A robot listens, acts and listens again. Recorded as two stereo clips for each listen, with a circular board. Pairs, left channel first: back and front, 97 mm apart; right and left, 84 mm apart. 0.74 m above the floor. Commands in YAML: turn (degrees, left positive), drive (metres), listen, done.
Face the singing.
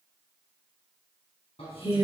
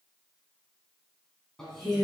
turn: -175
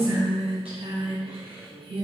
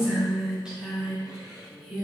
done: "Found it: singing, straight ahead."